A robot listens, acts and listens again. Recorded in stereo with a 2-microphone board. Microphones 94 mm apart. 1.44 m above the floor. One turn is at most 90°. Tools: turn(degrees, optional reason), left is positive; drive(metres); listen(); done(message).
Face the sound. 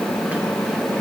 listen()
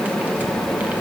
listen()
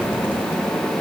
done("I can't make out anything to turn to.")